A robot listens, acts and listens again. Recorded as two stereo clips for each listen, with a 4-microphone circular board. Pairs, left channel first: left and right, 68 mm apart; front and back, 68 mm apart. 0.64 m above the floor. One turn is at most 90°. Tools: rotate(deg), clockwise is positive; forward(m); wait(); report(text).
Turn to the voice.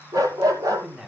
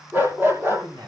rotate(90)
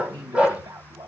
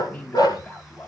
rotate(70)
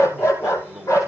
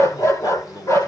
report("Found it: a man speaking, straight ahead, 2 to 4 m away.")